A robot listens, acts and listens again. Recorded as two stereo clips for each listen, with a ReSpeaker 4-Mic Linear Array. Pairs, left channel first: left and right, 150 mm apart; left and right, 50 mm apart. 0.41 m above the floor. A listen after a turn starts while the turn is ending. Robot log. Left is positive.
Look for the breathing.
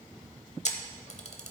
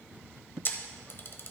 cmd idle
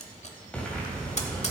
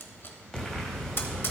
cmd yaw +30
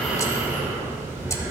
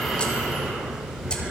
note: So it is at 20° right.
cmd yaw -20
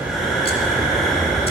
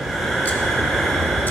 end: Found it: breathing, straight ahead.